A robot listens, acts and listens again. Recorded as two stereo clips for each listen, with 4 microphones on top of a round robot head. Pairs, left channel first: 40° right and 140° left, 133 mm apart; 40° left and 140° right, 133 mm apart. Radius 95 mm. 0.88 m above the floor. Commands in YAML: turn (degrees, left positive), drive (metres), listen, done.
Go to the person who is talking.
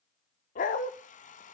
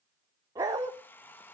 listen: true
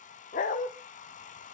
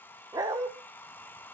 listen: true
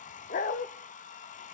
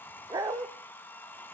done: "I can't make out anyone speaking, only a hair dryer and a dog barking."